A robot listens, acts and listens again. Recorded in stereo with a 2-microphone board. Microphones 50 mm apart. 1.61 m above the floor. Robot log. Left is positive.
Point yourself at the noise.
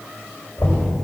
note: The knocking: about 60° left or 120° left.
cmd yaw +60
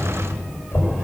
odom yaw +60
note: So it is at 60° left.
cmd yaw +60
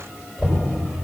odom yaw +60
end: Facing the knocking, over 4 m away.